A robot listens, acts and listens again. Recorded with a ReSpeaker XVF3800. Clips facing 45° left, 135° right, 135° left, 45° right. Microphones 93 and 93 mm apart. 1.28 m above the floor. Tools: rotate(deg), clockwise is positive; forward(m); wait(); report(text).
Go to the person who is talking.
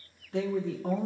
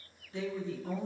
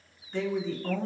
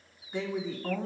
rotate(-35)
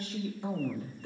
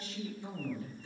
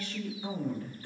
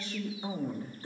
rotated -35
rotate(-15)
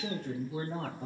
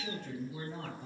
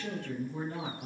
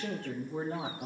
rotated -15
forward(1.0)
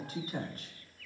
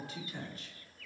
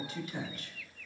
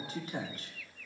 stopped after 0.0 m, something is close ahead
report("Something is in my way. I am facing the woman speaking but have not reached it.")